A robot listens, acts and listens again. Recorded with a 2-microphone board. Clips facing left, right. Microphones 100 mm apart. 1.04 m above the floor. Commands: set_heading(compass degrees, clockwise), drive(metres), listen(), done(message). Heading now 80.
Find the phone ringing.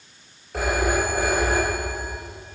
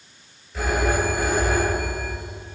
set_heading(5)
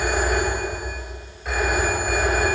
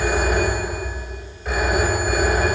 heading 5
done("Found it: a phone ringing, straight ahead, 2 to 4 m away.")